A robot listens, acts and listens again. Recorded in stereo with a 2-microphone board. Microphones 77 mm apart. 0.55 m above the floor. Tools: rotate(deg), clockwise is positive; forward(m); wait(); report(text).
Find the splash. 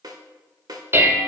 wait()
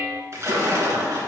rotate(40)
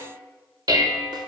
wait()
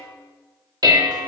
report("I heard a splash, but can't make it out now. It was about straight ahead or 100° right.")